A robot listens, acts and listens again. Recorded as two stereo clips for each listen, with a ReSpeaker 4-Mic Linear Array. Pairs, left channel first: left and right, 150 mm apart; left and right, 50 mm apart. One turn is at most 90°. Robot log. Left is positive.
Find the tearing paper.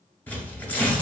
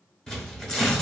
cmd yaw +30
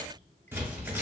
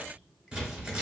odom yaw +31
note: So it is at 15° right.
cmd yaw -15
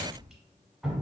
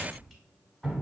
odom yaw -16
cmd idle
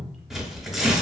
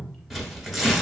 end: Found it: tearing paper, straight ahead, 1 to 2 m away.